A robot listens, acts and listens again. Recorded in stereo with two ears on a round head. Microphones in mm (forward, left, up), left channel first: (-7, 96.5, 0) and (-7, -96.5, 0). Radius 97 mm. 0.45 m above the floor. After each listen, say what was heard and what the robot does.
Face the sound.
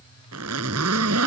Turn 90° right.
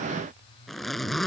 Facing the zipper.